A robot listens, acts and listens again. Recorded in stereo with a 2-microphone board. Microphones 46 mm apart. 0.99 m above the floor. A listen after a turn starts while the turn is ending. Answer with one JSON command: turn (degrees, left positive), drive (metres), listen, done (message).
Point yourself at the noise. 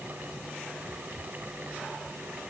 {"listen": true}
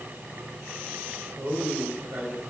{"turn": -60}
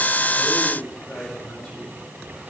{"done": "Facing the man speaking."}